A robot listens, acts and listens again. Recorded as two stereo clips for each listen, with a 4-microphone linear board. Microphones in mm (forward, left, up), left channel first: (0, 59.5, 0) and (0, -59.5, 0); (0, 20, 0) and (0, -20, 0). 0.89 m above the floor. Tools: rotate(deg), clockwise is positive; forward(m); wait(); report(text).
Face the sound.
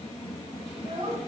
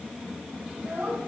rotate(50)
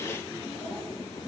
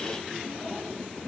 wait()
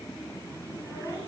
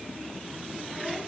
wait()
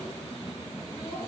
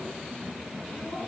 report("I heard a child speaking, but can't make it out now. It was about straight ahead or 80° right.")